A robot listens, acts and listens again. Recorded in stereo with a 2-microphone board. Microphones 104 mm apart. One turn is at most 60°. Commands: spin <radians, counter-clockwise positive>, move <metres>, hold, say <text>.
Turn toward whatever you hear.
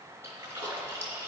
spin -0.44
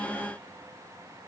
hold
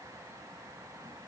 say I heard a splash, but can't make it out now. It was about straight ahead or 130° right.